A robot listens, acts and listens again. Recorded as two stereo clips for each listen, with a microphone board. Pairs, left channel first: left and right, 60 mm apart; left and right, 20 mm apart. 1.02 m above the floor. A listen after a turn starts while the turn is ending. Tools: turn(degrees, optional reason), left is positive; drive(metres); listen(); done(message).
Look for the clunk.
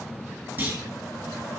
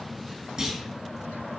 turn(degrees=-35, reason="The clunk: about 35° right or 145° right.")
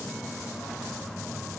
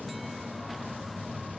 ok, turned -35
listen()
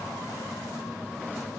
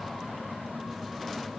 done("I heard a clunk, but can't make it out now. It was about straight ahead or 110° right.")